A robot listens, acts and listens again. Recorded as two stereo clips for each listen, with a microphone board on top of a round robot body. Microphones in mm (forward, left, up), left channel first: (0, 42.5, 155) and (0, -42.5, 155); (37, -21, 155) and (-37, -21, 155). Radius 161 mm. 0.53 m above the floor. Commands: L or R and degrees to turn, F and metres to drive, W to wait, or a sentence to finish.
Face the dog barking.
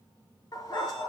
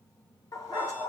L40
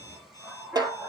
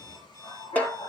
Facing the dog barking, over 4 m away.